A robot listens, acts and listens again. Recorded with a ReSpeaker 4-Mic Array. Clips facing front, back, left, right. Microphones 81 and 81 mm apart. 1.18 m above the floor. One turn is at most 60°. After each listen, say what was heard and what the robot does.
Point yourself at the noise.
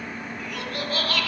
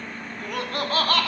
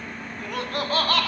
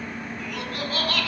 The laughter: 125° left. Turn 60° left.
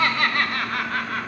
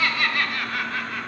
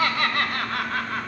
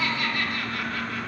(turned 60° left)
The laughter is now 40° left. Turn 40° left.
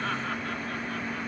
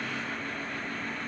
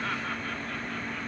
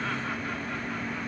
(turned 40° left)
Keep listening.
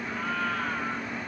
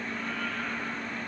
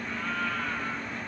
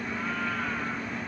Keep listening.
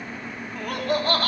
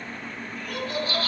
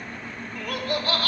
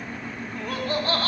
The laughter is now 35° right. Turn 35° right.
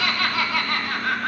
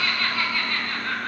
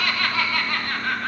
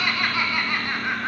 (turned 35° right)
The laughter is now 15° right. Turn 15° right.
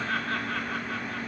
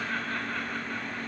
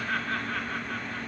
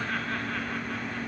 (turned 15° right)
Keep listening.
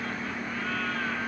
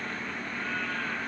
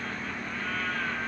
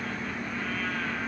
Keep listening.
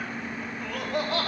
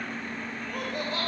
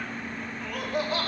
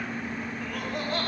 Facing the laughter.